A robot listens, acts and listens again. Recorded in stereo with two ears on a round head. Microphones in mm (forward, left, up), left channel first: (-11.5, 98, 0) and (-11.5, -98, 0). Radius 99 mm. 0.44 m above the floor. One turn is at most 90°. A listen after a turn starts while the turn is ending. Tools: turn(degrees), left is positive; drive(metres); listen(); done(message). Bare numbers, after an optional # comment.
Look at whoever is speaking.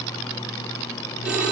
listen()
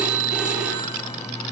listen()
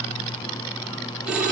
done("I can't make out anyone speaking to turn to.")